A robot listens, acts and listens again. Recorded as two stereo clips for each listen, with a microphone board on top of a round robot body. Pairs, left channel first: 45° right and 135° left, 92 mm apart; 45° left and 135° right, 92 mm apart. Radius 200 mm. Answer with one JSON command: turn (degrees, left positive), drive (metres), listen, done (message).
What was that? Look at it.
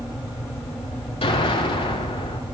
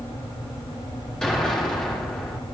{"turn": -35}
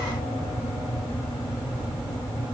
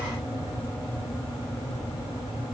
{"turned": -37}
{"done": "Facing where the explosion came from. I can't hear it now."}